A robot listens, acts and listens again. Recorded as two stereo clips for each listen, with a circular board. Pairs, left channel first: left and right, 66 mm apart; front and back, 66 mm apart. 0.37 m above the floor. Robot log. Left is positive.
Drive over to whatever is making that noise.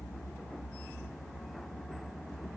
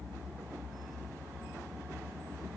cmd idle
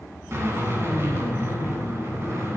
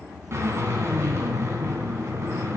note: The drill: 135° right.
cmd yaw -135
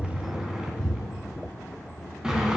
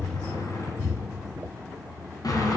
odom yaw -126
note: The drill is now 10° right.
cmd yaw -10
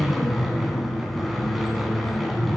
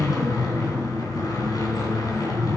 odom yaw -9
cmd fwd 1.0
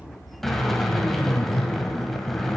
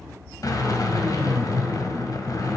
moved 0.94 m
cmd fwd 1.0
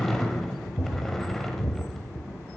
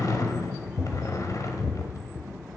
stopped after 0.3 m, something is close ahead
end: I am next to the drill.